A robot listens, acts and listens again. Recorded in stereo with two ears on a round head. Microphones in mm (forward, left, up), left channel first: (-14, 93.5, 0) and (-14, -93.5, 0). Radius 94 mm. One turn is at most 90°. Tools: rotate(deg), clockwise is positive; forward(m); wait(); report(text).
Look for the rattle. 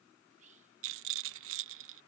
rotate(70)
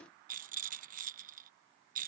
rotate(40)
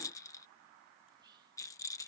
rotate(-15)
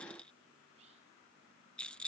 report("Found it: a rattle, straight ahead.")